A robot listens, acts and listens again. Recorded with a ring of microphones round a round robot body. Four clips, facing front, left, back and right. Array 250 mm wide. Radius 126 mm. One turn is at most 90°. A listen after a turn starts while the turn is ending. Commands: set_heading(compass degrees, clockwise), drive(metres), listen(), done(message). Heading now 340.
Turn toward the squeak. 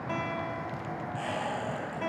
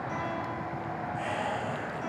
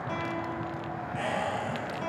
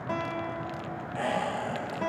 set_heading(70)
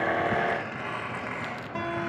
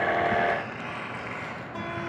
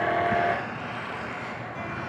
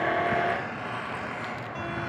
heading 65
set_heading(90)
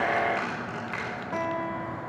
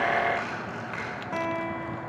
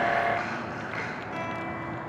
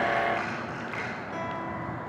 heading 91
done("Facing the squeak.")